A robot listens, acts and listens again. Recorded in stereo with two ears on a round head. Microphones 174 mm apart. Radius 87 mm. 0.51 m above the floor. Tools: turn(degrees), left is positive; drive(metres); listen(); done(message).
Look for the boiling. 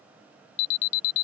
listen()
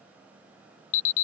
listen()
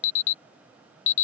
done("I can't make out boiling to turn to.")